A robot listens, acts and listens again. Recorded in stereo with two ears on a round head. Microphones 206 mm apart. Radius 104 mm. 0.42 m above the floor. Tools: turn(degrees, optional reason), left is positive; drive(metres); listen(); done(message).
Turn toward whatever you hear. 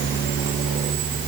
listen()
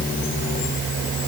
listen()
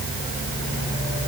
done("I can't make out anything to turn to.")